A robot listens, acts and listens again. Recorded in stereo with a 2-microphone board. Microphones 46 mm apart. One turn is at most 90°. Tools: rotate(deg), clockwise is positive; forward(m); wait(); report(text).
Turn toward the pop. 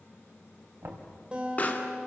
rotate(-35)
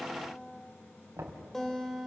wait()
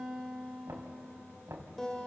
report("I heard a pop, but can't make it out now. It was about straight ahead or 110° left.")